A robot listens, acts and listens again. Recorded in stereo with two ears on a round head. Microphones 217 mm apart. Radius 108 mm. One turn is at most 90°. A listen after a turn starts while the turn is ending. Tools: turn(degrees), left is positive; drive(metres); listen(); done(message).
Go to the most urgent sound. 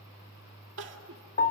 turn(degrees=-50)
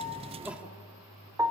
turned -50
listen()
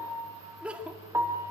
drive(metres=1.0)
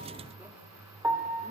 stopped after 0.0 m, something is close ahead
done("Blocked. The crying is further on, straight ahead.")